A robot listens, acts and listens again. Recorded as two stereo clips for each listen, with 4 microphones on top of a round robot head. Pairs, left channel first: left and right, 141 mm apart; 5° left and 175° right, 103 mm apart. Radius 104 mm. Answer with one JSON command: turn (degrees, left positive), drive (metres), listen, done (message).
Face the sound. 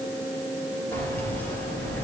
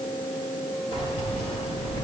{"turn": 15}
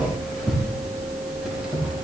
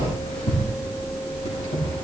{"done": "Facing the keys jangling."}